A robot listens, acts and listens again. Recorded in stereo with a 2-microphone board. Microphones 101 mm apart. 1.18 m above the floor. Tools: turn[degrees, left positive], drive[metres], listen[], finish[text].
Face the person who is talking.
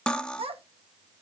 Thought: The child speaking: about 65° right or 115° right.
Action: turn[-65]
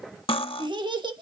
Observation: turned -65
Thought: So it is at 45° right.
Action: turn[-45]
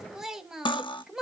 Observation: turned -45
Action: finish[Found it: a child speaking, straight ahead.]